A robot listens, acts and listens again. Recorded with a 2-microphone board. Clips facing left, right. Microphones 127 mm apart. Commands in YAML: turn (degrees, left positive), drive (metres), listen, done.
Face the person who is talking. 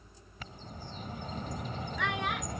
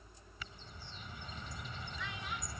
turn: 70
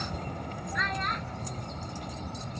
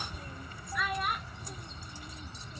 done: "Found it: a child speaking, straight ahead."